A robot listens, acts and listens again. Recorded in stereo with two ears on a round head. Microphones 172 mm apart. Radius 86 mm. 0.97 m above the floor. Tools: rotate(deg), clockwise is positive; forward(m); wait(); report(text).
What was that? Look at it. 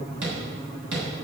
rotate(70)
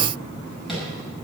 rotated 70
wait()
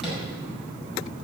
report("Facing the tapping, over 4 m away.")